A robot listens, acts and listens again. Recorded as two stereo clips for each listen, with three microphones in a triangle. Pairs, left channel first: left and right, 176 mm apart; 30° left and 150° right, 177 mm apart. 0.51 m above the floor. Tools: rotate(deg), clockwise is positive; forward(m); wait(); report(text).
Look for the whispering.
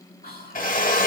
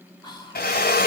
rotate(-90)
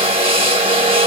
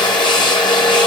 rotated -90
wait()
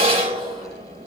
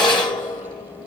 wait()
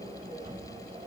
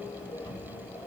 report("I heard whispering from this way, but can't make it out now.")